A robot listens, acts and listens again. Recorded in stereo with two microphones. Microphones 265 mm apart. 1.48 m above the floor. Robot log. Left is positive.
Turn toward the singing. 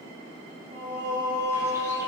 note: The singing: about 40° right or 140° right.
cmd yaw -40
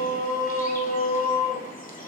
note: So it is at 100° right.
cmd yaw -100
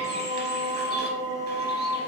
note: The singing is now 45° left.
cmd yaw +45
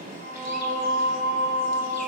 end: Found it: singing, straight ahead.